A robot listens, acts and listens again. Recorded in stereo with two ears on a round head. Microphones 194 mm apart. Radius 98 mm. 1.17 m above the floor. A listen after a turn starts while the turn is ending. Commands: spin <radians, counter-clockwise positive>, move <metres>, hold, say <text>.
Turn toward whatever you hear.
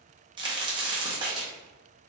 spin -0.35
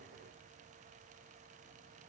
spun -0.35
hold
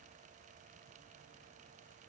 say I heard a crack, but can't make it out now. It was about straight ahead or 140° right.